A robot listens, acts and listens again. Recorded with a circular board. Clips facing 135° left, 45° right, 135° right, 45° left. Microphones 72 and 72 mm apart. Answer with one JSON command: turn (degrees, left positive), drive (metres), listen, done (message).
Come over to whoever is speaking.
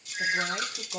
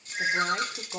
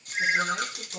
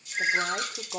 {"turn": 20}
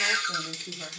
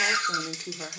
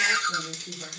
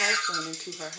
{"drive": 1.0}
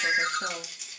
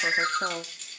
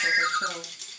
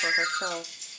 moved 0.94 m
{"drive": 1.0}
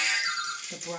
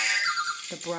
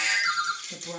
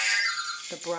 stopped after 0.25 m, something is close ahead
{"turn": 10}
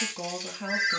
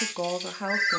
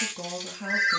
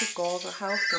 {"done": "I am next to the woman speaking."}